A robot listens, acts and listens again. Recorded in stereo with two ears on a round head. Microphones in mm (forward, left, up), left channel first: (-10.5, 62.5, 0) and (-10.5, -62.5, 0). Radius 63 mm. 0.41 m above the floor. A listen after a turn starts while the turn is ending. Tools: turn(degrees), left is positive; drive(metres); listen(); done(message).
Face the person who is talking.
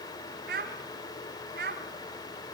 turn(degrees=-75)
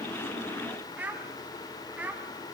turn(degrees=-10)
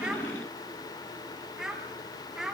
done("Facing the child speaking, 2 to 4 m away.")